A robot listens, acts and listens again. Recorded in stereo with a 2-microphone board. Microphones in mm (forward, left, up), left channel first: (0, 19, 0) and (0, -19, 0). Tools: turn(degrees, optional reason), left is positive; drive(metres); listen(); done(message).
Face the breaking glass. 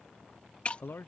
turn(degrees=35, reason="The breaking glass: about 35° left or 145° left.")
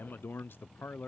listen()
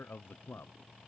done("I heard breaking glass, but can't make it out now. It was about straight ahead or 110° left.")